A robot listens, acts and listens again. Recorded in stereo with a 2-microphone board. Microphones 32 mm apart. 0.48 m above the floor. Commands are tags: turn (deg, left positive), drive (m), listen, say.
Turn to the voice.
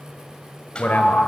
<turn deg="60"/>
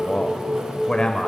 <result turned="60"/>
<turn deg="25"/>
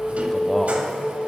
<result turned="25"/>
<listen/>
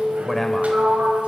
<say>Facing the man speaking.</say>